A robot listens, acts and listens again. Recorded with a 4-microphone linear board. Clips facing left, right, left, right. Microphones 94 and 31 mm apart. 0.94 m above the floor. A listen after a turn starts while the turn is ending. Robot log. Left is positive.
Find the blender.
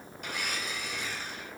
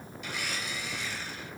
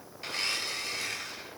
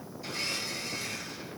note: The blender: about 50° left or 130° left.
cmd yaw +50
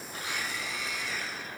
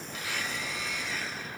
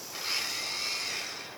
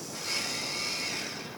end: Facing the blender, under 1 m away.